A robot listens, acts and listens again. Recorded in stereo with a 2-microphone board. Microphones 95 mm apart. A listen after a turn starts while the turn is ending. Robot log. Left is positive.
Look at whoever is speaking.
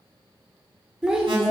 cmd yaw -30
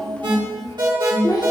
note: So it is at 45° left.
cmd yaw +45
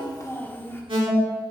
note: The child speaking is now 25° left.
cmd yaw +25
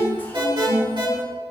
cmd idle
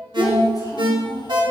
note: The child speaking is now 50° left.
cmd yaw +50
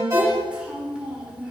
note: The child speaking is now 10° right.
cmd yaw -10
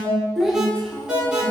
end: Found it: a child speaking, straight ahead, 1 to 2 m away.